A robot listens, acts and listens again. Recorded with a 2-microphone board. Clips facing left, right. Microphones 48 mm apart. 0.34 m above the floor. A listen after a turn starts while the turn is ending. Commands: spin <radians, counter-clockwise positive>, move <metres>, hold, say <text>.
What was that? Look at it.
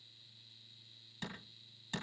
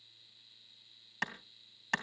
spin -1.05
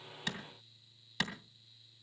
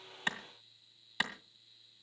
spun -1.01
spin -0.26
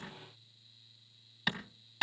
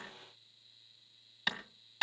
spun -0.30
say Facing the clap, 2 to 4 m away.